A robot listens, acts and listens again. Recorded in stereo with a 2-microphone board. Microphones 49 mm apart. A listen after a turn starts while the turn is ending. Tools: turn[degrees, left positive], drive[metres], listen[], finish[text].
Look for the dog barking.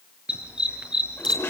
Thought: The dog barking: about 15° right or 165° right.
Action: turn[-15]
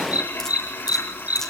Thought: So it is at 150° right.
Action: turn[-150]
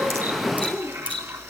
Thought: The dog barking is now 10° left.
Action: turn[10]
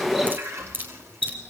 Action: finish[Facing the dog barking, over 4 m away.]